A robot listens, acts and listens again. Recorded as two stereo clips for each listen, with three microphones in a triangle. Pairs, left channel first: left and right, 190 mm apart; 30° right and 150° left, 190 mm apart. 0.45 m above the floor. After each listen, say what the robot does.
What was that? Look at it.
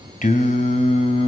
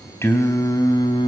Turn 35° left.
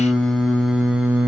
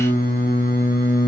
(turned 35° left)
Turn 10° right.
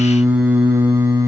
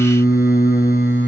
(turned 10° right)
Turn 15° right.
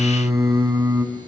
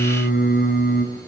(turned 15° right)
Turn 15° right.
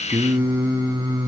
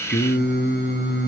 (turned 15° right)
Turn 15° right.
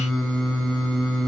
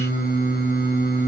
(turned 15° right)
Facing the singing, 2 to 4 m away.